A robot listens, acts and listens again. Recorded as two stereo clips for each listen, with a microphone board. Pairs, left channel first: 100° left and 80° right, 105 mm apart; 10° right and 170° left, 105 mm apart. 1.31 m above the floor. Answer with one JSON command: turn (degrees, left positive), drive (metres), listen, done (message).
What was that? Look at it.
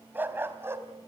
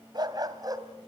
{"turn": -140}
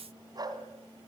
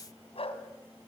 {"turn": -30}
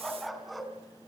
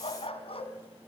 {"turn": 10}
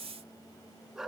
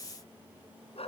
{"turn": 10}
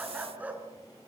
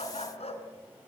{"done": "Found it: a dog barking, straight ahead."}